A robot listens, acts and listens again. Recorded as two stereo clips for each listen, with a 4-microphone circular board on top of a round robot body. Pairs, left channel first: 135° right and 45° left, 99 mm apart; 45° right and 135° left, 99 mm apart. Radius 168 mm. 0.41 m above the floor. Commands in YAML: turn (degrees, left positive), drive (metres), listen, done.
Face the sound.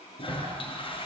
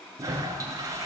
turn: -170
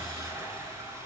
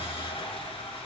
turn: -20
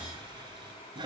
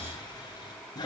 done: "Found it: a toilet flushing, straight ahead."